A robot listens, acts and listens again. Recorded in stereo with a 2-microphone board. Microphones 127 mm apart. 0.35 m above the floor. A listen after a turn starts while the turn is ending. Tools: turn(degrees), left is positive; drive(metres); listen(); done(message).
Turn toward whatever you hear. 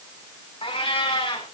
turn(degrees=45)
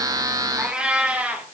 turn(degrees=-10)
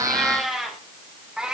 done("Found it: a cat meowing, straight ahead.")